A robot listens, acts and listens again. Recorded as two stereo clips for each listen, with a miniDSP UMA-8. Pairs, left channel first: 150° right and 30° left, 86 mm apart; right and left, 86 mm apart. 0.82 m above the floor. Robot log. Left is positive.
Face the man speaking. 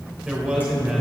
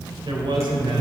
note: The man speaking: 110° left.
cmd yaw +110
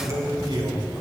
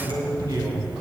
note: The man speaking is now 55° left.
cmd yaw +55
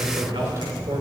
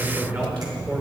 note: The man speaking is now 30° left.
cmd yaw +30
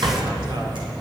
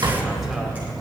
cmd idle
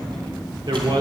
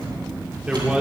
note: The man speaking is now 15° left.
cmd yaw +15
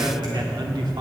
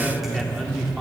end: Facing the man speaking, 2 to 4 m away.